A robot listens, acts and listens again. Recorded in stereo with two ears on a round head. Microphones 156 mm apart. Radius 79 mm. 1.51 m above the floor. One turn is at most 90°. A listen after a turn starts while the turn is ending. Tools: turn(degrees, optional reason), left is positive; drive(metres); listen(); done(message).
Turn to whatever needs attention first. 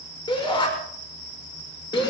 turn(degrees=30, reason="The shout: about 30° left or 150° left.")
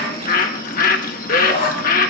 turn(degrees=90, reason="So it is at 120° left.")
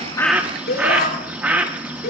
turn(degrees=55, reason="The shout is now 55° left.")
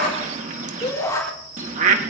turn(degrees=20, reason="The shout is now 20° left.")
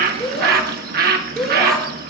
done("Found it: a shout, straight ahead.")